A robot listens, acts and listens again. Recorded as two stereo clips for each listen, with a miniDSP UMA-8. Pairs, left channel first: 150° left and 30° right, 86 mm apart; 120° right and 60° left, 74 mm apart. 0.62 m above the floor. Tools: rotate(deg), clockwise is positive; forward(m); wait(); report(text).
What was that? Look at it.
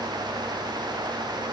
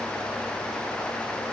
wait()
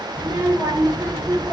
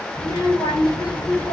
rotate(80)
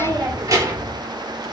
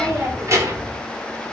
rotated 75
rotate(-20)
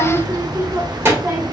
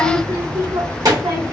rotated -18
rotate(-30)
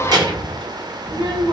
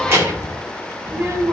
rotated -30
report("Facing the child speaking, 2 to 4 m away.")